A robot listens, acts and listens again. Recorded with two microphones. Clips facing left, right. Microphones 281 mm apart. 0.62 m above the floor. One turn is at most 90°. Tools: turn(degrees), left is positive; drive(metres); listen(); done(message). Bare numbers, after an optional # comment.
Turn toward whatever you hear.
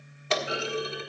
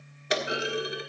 # The clunk: about 15° right or 165° right.
turn(-15)
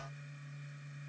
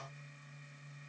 listen()
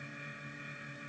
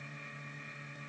done("I heard a clunk, but can't make it out now. It was about straight ahead or 150° right.")